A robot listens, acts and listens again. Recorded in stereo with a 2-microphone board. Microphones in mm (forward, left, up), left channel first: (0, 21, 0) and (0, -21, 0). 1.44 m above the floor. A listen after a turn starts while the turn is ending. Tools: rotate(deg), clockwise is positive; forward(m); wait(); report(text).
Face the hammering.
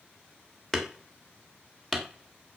rotate(-30)
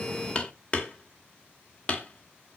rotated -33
rotate(-140)
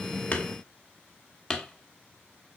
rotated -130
rotate(-10)
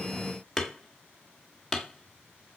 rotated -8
report("Facing the hammering, 1 to 2 m away.")